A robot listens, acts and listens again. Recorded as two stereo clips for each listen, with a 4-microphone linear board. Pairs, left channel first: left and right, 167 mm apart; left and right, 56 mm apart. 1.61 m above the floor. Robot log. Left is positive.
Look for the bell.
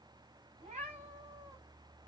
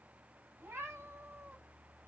cmd idle
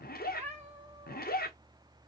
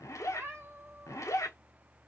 cmd idle
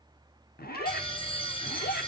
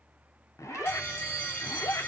note: The bell: about 30° left or 150° left.
cmd yaw +30
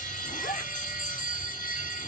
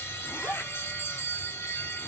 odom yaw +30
note: So it is at 115° left.
cmd yaw +115
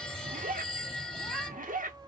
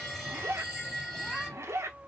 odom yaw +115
end: Facing the bell.